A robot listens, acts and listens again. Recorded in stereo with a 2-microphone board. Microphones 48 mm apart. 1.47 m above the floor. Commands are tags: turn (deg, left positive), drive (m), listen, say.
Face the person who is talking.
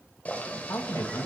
<turn deg="90"/>
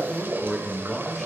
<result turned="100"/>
<say>Found it: a man speaking, straight ahead, 1 to 2 m away.</say>